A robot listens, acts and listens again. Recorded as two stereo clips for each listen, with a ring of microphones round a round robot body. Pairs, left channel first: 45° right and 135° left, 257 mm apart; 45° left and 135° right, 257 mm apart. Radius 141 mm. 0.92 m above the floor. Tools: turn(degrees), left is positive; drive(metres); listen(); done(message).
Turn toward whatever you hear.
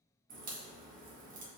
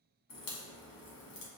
turn(degrees=75)
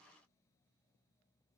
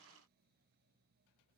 done("Facing where the crack came from. I can't hear it now.")